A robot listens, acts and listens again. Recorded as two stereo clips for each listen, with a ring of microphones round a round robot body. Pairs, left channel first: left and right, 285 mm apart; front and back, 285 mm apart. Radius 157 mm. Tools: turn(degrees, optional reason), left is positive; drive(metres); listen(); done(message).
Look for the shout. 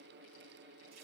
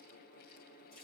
listen()
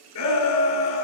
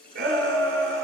turn(degrees=120, reason="The shout: 120° left.")
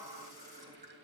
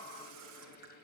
listen()
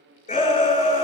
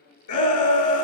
turn(degrees=20, reason="The shout is now 20° left.")
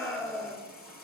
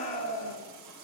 done("Facing the shout.")